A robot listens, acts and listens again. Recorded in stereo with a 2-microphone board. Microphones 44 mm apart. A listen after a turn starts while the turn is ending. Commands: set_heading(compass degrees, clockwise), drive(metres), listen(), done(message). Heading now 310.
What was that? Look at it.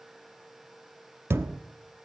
set_heading(20)
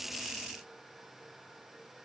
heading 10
listen()
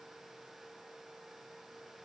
done("I heard a thud, but can't make it out now. It was about 10° right or 50° right.")